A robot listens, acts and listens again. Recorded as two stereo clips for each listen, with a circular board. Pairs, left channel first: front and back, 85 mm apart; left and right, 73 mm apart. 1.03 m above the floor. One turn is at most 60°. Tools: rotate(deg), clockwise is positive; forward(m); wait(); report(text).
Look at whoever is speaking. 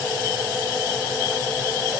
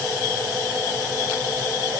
wait()
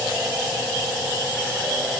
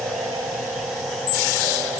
wait()
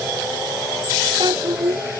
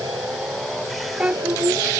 rotate(60)
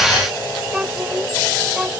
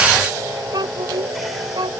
rotate(60)
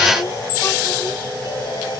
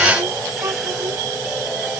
rotate(40)
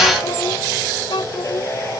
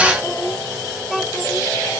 report("Found it: a child speaking, straight ahead.")